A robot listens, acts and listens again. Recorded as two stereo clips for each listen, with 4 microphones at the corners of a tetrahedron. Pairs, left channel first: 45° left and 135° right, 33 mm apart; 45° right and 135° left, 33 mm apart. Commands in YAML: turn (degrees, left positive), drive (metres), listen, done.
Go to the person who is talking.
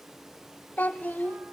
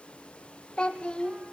turn: 15
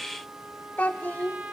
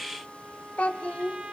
drive: 1.0
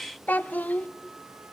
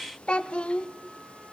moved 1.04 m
turn: 15
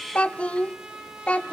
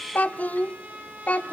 drive: 1.0
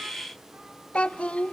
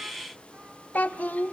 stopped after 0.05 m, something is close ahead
done: "I am next to the child speaking."